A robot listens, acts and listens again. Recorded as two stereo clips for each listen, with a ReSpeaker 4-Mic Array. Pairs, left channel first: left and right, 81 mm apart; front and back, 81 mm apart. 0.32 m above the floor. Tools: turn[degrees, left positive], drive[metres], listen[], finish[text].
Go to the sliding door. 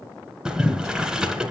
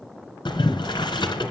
Action: listen[]
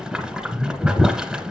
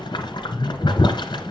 Action: listen[]
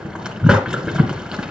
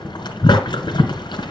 Action: finish[I can't make out a sliding door to turn to.]